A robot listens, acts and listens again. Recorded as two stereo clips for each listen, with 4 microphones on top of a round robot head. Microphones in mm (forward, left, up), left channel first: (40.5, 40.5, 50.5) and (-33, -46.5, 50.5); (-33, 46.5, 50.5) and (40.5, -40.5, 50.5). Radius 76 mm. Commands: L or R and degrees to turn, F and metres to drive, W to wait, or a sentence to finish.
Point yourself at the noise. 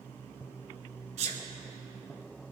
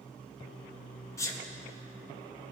R165
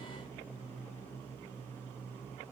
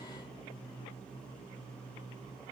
Facing where the sneeze came from. I can't hear it now.